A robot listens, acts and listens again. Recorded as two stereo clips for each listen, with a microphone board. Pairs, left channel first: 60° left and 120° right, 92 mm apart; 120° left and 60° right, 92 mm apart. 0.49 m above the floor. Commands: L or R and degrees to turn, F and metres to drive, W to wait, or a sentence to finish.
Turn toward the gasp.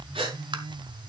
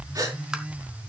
R105
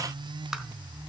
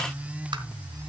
I heard a gasp from this way, but can't make it out now.